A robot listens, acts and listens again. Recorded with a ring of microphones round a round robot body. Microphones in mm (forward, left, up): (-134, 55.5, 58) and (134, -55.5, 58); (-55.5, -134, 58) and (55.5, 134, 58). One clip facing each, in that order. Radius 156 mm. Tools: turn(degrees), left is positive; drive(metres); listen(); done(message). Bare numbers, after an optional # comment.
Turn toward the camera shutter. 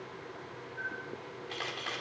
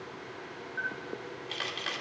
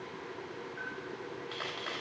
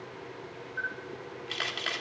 # The camera shutter: 35° left.
turn(35)
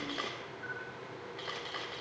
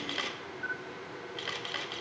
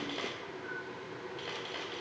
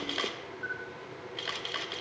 # The camera shutter is now 10° left.
turn(10)
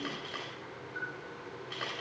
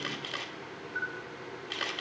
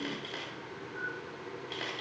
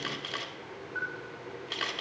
done("Facing the camera shutter, 1 to 2 m away.")